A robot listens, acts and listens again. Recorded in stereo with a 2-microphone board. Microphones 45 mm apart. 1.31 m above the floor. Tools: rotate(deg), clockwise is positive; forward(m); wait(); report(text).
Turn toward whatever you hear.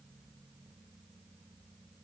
wait()
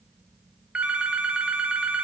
rotate(20)
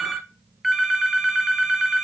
report("Facing the phone ringing.")